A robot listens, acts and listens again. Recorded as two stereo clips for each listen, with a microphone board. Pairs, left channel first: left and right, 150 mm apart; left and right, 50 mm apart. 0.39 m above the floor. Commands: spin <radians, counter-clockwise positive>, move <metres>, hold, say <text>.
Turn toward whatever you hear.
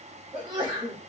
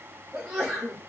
spin -0.44
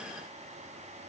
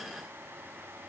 hold
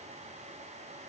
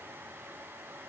say I heard a sneeze, but can't make it out now. It was about straight ahead or 130° right.